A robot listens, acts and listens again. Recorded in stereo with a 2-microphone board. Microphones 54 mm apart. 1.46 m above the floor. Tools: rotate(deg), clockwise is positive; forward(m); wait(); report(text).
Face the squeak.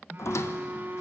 rotate(-60)
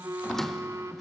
rotate(-10)
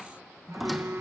report("Facing the squeak, 1 to 2 m away.")